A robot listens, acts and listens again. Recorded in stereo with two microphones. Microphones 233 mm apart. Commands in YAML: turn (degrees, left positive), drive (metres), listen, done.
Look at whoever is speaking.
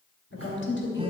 turn: 55
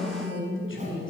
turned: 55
turn: 65
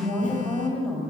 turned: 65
done: "Facing the woman speaking, 2 to 4 m away."